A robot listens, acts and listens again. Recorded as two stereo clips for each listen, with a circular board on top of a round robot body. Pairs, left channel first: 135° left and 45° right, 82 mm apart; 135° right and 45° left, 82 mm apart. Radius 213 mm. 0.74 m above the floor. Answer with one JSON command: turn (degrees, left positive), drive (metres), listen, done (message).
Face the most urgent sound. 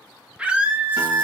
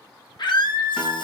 {"turn": -120}
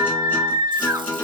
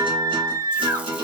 {"done": "Facing the scream."}